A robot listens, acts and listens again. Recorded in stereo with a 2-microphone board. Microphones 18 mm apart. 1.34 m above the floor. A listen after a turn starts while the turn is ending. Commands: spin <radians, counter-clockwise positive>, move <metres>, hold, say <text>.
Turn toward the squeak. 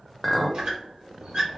spin -0.87
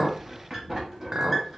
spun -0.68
spin -0.26
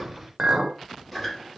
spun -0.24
say Found it: a squeak, straight ahead.